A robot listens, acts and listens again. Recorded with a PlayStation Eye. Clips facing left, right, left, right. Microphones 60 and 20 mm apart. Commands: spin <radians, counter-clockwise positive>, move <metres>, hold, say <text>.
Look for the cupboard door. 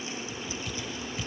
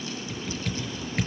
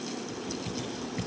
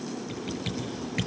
hold
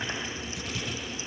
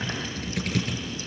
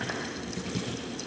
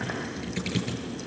hold
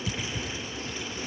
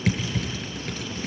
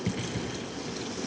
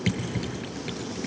say I can't make out a cupboard door, only typing on a keyboard.